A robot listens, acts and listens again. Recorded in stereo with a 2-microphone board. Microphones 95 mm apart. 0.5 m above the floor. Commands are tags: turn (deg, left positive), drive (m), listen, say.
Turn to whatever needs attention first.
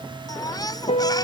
<turn deg="45"/>
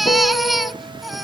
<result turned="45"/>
<say>Facing the baby crying.</say>